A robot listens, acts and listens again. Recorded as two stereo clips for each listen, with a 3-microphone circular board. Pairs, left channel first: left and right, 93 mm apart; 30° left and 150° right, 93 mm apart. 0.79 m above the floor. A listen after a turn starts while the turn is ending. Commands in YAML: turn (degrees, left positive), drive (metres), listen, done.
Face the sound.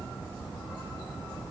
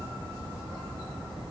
listen: true
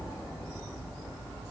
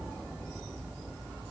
listen: true
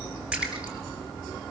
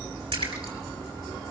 turn: -170
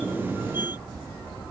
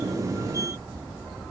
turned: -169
done: "Facing where the splash came from. I can't hear it now."